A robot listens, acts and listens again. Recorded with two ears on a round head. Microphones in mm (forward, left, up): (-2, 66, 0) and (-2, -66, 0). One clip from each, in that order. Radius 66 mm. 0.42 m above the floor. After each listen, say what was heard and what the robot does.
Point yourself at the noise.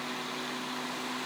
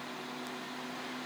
Keep listening.
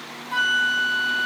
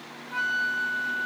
The flute: about 55° left or 125° left. Turn 55° left.
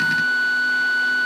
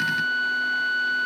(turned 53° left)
So it is at 65° left. Turn 65° left.
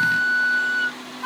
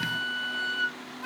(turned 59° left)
Facing the flute, 1 to 2 m away.